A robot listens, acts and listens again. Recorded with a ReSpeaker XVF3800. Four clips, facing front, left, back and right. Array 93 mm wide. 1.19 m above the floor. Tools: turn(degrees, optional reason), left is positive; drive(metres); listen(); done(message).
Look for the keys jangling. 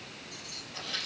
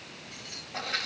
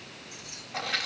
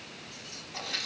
turn(degrees=110, reason="The keys jangling: 110° left.")
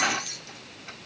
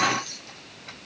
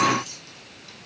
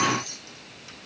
done("Facing the keys jangling, 2 to 4 m away.")